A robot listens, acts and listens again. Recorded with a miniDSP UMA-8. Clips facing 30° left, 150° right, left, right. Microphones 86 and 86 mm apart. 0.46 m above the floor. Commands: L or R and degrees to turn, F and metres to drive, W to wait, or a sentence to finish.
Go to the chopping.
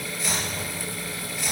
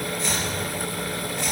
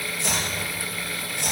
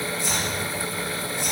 L115
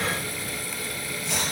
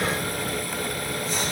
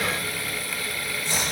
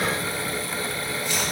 L35
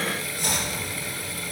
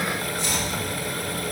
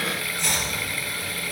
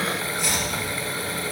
F1.0
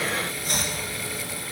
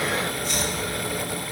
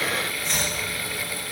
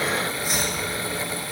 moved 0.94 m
R10
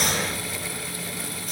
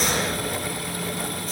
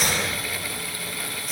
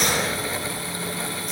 F1.0
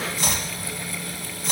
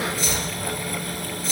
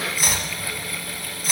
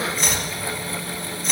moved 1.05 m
F1.0
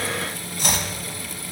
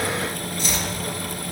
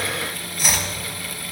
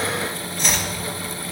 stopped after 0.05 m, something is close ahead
I am next to the chopping.